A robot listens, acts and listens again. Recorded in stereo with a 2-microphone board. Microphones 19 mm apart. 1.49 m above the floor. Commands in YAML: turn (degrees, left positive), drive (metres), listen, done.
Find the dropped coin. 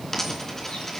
turn: 30
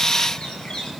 listen: true
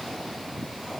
done: "I heard a dropped coin, but can't make it out now. It was about 15° right or 135° left."